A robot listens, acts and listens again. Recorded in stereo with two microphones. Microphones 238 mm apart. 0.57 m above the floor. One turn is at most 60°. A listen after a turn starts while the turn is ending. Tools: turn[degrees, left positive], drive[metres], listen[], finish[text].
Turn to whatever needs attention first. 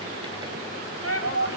Thought: The shout: about 70° left or 110° left.
Action: turn[60]
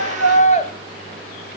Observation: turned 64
Thought: So it is at 35° left.
Action: turn[35]
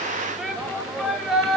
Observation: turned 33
Action: finish[Facing the shout.]